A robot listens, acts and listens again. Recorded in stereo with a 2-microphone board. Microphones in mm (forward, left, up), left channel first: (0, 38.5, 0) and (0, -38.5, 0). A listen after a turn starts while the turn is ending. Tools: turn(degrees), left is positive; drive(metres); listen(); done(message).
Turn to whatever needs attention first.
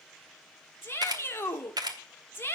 turn(degrees=30)
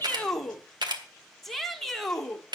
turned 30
done("Found it: a shout, straight ahead.")